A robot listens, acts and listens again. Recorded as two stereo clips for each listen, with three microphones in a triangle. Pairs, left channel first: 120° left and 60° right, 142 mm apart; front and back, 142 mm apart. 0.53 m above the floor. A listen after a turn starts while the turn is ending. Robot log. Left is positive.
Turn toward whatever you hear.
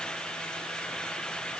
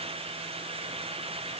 cmd idle
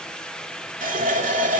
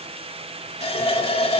note: The running tap: 45° right.
cmd yaw -45
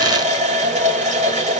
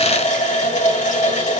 note: The running tap is now 30° right.
cmd yaw -30
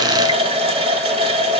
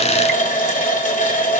note: The running tap is now 15° right.
cmd yaw -15
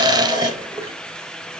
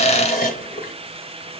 end: Found it: a running tap, straight ahead, 1 to 2 m away.